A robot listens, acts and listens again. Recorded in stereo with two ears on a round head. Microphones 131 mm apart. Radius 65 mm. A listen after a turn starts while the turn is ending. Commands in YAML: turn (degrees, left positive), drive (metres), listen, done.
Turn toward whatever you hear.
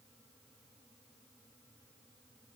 listen: true
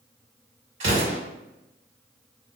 turn: -50
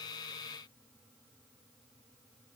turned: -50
listen: true
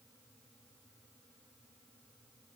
done: "I heard an explosion, but can't make it out now. It was about straight ahead or 80° right."